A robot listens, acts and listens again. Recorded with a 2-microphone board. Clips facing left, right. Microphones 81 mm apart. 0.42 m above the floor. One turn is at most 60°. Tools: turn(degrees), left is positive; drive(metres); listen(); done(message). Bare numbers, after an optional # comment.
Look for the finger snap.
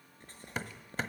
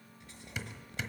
listen()
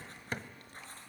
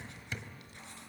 listen()
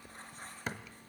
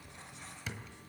done("I can't make out a finger snap, only hammering and writing.")